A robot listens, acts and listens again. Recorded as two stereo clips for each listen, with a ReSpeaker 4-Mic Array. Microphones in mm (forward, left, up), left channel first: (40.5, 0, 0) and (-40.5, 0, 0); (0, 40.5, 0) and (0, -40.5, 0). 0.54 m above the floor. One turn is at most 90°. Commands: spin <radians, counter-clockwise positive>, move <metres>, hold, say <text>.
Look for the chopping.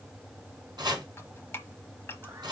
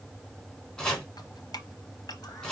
spin 1.57
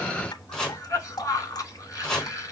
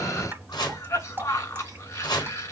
spin 1.40
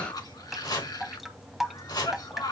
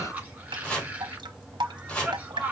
spin 0.26
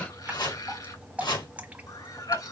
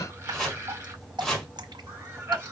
say Found it: chopping, straight ahead.